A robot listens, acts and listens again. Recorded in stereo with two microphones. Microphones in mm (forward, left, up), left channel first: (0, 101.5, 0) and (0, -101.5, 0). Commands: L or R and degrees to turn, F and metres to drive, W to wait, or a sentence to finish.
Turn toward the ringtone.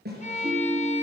R30
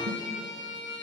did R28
W
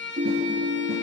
R135
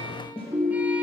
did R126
R10
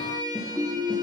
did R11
Found it: a ringtone, straight ahead, 1 to 2 m away.